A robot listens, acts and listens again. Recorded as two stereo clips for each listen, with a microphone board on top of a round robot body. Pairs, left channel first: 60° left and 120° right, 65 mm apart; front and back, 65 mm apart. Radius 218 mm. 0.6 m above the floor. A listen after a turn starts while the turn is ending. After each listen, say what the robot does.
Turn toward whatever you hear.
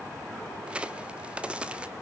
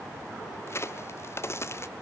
Turn 45° right.
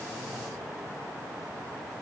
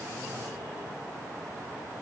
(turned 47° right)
Facing where the crack came from. I can't hear it now.